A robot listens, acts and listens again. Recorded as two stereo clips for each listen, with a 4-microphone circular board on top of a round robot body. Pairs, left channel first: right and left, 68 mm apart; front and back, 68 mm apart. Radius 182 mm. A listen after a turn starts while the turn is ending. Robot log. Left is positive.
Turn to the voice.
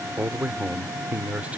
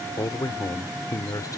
note: The man speaking: 20° left.
cmd yaw +20
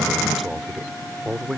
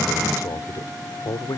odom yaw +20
end: Facing the man speaking.